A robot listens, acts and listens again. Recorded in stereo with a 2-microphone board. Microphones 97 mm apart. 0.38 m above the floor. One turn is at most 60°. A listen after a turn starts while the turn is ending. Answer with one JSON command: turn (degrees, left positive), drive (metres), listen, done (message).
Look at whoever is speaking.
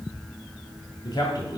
{"turn": 45}
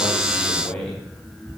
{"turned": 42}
{"turn": 10}
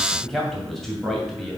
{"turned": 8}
{"done": "Found it: a man speaking, straight ahead."}